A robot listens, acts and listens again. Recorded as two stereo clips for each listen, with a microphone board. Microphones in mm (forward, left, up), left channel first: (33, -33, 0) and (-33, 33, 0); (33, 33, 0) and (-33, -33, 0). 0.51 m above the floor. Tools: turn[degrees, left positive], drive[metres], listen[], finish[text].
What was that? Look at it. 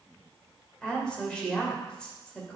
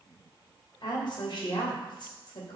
Thought: The woman speaking: 35° left.
Action: turn[35]
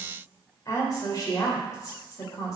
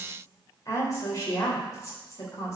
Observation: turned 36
Action: finish[Facing the woman speaking.]